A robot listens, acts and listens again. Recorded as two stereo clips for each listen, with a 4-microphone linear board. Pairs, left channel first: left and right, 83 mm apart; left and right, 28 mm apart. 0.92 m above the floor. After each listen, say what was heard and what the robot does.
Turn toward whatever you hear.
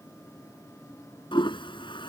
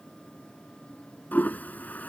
Turn 90° left.
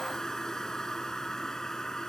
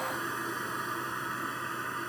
Found it: a toilet flushing, straight ahead.